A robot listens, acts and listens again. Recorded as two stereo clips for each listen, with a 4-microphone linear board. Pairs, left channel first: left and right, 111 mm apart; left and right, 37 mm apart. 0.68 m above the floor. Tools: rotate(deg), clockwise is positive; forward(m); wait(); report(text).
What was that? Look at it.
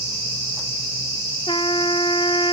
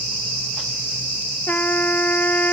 rotate(-50)
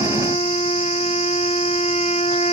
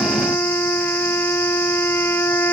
rotate(-80)
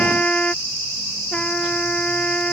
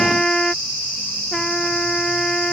rotate(-10)
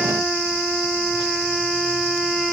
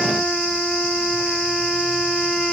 report("Facing the trumpet.")